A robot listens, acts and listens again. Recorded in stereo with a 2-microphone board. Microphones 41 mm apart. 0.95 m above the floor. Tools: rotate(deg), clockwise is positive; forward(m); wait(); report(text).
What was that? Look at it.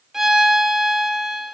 rotate(30)
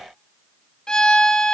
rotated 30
rotate(-20)
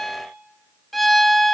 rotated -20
report("Found it: a violin, straight ahead, under 1 m away.")